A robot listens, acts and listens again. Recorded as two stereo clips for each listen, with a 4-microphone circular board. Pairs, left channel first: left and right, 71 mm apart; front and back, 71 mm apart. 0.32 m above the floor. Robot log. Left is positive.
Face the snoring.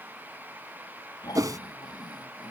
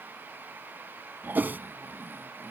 note: The snoring: 120° left.
cmd yaw +120
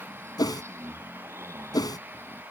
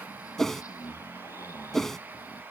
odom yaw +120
note: The snoring is now 40° right.
cmd yaw -40
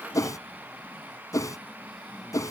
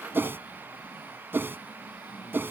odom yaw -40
end: Facing the snoring.